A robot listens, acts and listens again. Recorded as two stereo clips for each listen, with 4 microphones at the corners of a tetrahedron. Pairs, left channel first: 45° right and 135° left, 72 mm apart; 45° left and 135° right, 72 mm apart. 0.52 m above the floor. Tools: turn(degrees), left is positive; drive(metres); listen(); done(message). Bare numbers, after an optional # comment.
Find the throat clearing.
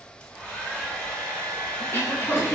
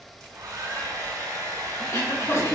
done("Found it: throat clearing, straight ahead.")